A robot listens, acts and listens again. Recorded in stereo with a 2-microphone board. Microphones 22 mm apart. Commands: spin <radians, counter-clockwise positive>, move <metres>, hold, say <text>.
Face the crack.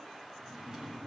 hold
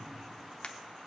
spin 0.79
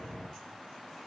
hold
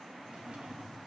say I heard a crack, but can't make it out now. It was about straight ahead or 90° left.